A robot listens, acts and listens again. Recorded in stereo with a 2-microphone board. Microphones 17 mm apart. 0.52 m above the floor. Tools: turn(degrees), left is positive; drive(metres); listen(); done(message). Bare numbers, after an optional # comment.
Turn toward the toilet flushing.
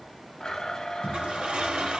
# The toilet flushing: about 65° right or 115° right.
turn(-65)
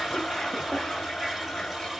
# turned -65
# So it is at 30° right.
turn(-30)
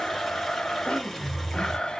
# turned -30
done("Facing the toilet flushing, 2 to 4 m away.")